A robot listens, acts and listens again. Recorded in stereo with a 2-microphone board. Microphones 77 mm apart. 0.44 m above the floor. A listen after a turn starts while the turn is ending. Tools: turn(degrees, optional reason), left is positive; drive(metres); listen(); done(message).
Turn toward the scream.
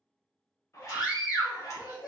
turn(degrees=60, reason="The scream: about 60° left or 120° left.")
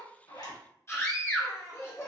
turn(degrees=40, reason="So it is at 40° left.")
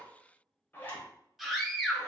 done("Facing the scream, 1 to 2 m away.")